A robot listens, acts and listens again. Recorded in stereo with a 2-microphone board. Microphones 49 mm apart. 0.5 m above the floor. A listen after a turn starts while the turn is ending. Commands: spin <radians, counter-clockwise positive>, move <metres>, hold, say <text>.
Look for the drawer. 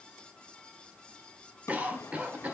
spin 1.22
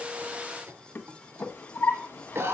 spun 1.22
spin 0.79
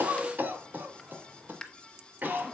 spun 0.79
spin 0.26
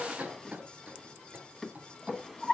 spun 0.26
say Facing the drawer, 1 to 2 m away.